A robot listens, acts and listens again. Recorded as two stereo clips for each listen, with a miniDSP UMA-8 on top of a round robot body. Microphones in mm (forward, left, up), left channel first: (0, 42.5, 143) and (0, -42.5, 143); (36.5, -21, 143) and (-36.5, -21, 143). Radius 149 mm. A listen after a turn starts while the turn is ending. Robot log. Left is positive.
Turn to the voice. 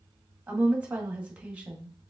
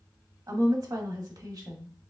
note: The woman speaking: 165° right.
cmd yaw -165
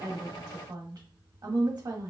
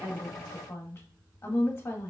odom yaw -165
note: The woman speaking is now 55° right.
cmd yaw -55
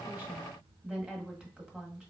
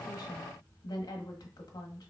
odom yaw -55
note: The woman speaking is now 15° right.
cmd yaw -15
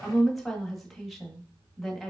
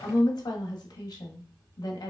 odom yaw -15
end: Facing the woman speaking, 1 to 2 m away.